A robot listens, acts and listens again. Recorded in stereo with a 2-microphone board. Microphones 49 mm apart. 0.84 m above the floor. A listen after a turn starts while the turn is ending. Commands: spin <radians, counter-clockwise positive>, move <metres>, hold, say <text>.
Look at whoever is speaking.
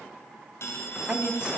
spin -0.44
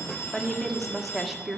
say Facing the woman speaking.